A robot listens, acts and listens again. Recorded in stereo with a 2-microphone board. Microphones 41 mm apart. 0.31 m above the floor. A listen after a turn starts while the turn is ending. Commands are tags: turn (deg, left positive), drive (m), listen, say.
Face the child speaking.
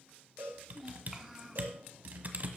<turn deg="-30"/>
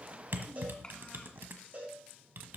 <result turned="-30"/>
<listen/>
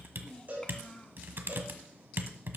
<turn deg="25"/>
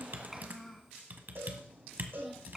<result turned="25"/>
<say>Found it: a child speaking, straight ahead, 2 to 4 m away.</say>